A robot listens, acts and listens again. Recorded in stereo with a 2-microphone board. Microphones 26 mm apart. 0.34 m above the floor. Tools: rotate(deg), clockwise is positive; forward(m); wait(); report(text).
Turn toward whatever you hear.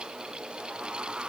wait()
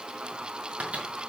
rotate(65)
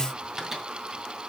rotate(15)
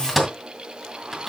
report("Facing the microwave.")